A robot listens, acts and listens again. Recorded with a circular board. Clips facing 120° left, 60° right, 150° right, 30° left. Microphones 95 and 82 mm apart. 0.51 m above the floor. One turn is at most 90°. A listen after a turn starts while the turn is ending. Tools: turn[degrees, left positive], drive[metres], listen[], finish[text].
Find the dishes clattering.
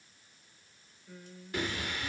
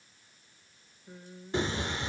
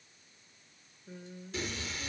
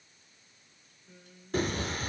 Action: listen[]
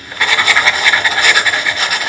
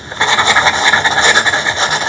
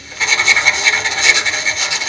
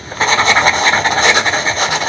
Action: listen[]
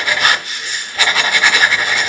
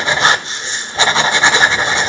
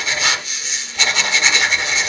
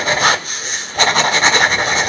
Action: finish[I can't make out dishes clattering, only singing and writing.]